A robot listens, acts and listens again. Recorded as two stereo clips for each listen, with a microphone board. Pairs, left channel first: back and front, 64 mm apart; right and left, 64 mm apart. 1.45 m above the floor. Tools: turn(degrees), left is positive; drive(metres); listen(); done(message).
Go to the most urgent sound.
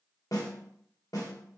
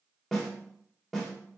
listen()
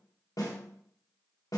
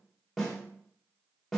listen()
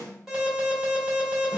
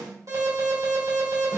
turn(degrees=80)
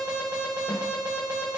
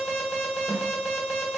turn(degrees=15)
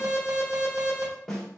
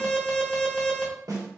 drive(metres=1.0)
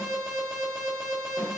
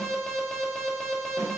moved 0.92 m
turn(degrees=-10)
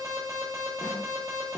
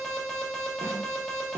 drive(metres=1.0)
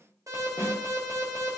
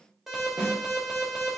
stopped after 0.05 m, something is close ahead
done("I am next to the alarm.")